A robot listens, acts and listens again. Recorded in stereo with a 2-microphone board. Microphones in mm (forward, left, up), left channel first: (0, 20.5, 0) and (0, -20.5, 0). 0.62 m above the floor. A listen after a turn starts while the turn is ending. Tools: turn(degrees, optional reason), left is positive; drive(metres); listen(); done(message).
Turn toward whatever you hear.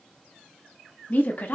turn(degrees=45, reason="The woman speaking: about 45° left or 135° left.")
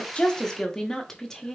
turn(degrees=15, reason="So it is at 15° left.")
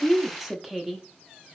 done("Facing the woman speaking.")